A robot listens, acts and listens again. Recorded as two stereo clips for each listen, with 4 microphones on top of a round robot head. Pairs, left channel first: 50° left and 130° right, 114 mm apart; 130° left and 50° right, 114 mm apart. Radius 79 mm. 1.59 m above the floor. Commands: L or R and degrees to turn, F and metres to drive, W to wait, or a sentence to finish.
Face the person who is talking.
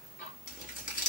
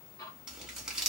W
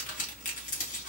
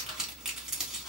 W
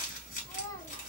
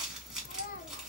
L115
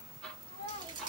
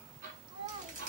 Facing the child speaking.